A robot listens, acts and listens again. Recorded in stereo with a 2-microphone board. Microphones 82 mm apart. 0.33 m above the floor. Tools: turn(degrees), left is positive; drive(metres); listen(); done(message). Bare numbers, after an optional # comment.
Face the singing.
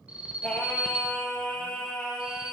turn(30)
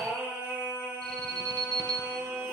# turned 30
# So it is at 30° right.
turn(-30)
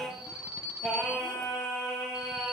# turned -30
done("Facing the singing.")